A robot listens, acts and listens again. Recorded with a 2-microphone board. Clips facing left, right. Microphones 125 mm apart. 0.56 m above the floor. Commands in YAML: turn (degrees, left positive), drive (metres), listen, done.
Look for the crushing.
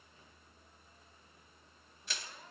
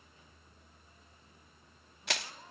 turn: -75
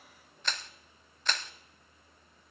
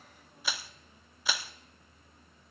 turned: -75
turn: -10
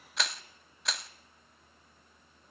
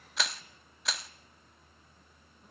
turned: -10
done: "Facing the crushing."